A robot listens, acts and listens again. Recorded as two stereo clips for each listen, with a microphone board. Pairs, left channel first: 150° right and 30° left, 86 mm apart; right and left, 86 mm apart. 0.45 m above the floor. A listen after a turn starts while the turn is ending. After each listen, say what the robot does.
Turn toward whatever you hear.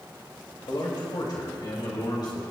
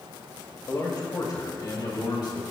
Turn 120° right.
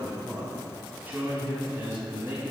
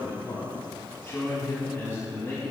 Turn 30° right.
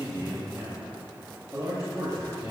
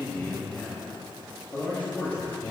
Turn 20° right.
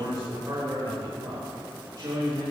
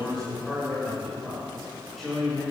Found it: a man speaking, straight ahead.